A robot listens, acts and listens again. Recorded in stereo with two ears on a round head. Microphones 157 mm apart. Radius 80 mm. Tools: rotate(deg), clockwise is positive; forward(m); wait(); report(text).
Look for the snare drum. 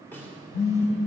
rotate(-30)
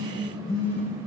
wait()
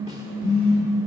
wait()
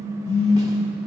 report("I heard a snare drum, but can't make it out now. It was about 20° right or 140° left.")